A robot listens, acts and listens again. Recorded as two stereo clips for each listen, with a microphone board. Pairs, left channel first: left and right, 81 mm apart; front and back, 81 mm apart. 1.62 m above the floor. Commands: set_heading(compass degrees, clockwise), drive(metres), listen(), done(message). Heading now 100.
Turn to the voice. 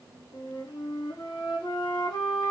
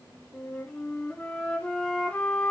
listen()
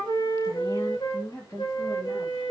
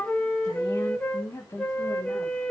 set_heading(55)
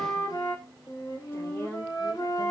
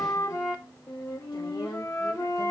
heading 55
set_heading(30)
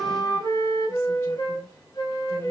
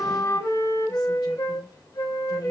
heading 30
listen()
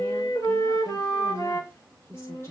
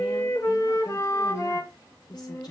set_heading(5)
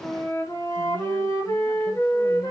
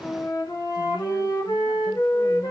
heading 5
listen()
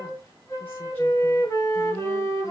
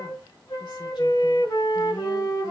listen()
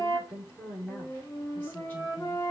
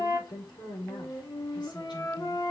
set_heading(345)
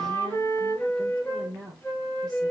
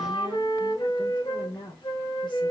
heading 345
done("Found it: a woman speaking, straight ahead.")